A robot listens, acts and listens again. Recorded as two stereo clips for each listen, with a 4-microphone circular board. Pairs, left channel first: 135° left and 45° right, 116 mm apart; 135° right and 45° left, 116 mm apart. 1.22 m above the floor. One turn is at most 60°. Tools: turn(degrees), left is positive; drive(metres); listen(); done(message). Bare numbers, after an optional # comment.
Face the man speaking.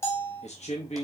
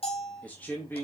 # The man speaking: 155° left.
turn(60)
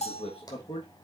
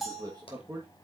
# The man speaking is now 110° left.
turn(60)
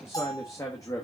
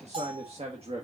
# The man speaking is now 75° left.
turn(60)
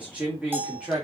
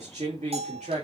# The man speaking is now 35° left.
turn(35)
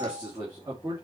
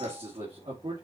# The man speaking is now 10° left.
turn(10)
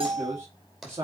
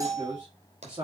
done("Facing the man speaking.")